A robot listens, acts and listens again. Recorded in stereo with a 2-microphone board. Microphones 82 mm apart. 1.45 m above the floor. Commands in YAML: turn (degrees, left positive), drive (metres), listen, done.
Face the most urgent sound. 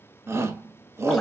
turn: -35
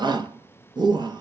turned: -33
turn: -115
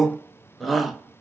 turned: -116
done: "Facing the shout."